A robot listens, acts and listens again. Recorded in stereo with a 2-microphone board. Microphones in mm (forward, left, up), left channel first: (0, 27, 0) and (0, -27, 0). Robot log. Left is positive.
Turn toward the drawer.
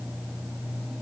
cmd idle
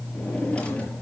note: The drawer: about 20° left or 160° left.
cmd yaw +20
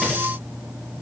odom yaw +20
cmd idle
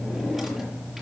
end: Facing the drawer, over 4 m away.